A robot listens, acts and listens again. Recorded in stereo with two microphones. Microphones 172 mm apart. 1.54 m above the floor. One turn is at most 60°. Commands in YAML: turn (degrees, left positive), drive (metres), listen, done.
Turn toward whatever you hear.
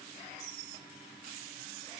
listen: true
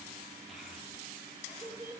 turn: -15
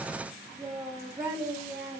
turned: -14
turn: -15
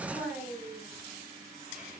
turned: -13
turn: -30
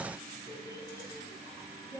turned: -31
turn: 20
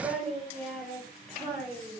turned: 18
done: "Found it: a child speaking, straight ahead."